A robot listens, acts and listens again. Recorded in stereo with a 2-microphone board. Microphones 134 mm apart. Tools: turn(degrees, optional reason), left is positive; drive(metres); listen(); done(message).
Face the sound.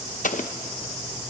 turn(degrees=90)
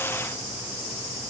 done("Facing where the explosion came from. I can't hear it now.")